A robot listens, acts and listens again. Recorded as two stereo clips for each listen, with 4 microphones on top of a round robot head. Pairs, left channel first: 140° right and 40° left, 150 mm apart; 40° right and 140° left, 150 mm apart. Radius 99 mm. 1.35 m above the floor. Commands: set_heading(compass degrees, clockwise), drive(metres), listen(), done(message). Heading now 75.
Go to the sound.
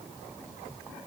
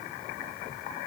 listen()
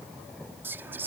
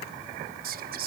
set_heading(320)
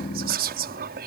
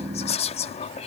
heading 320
set_heading(310)
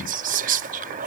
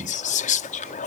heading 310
drive(1.0)
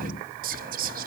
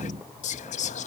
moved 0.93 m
drive(1.0)
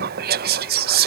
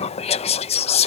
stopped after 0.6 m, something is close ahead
set_heading(295)
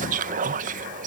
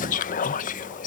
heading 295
done("Arrived at the whispering, straight ahead.")